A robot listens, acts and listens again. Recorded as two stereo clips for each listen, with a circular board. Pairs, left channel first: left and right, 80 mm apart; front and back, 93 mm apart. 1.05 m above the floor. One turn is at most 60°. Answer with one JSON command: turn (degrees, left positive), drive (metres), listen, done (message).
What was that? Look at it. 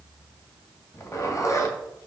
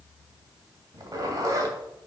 {"turn": 60}
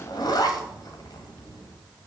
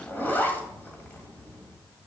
{"turn": 60}
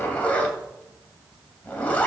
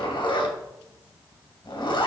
{"turn": 20}
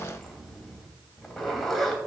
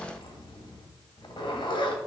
{"done": "Found it: a zipper, straight ahead."}